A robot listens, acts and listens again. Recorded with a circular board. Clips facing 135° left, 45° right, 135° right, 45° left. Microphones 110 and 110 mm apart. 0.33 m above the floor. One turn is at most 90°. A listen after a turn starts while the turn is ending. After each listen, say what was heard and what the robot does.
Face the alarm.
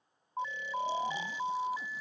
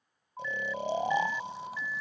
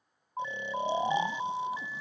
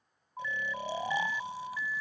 The alarm: straight behind. Turn 90° left.
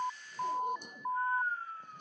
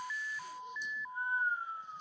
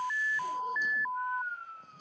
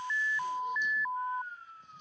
The alarm is now 135° left. Turn 90° left.
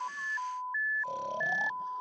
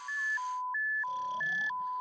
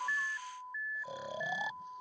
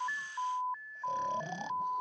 The alarm is now 35° left. Turn 35° left.
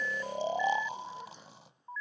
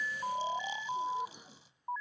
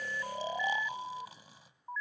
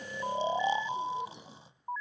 Facing the alarm.